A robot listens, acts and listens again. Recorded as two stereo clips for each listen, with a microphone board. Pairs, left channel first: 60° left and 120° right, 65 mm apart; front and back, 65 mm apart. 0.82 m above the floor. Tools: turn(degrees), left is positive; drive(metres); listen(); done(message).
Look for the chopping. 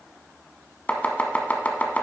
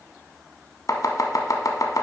done("Facing the chopping.")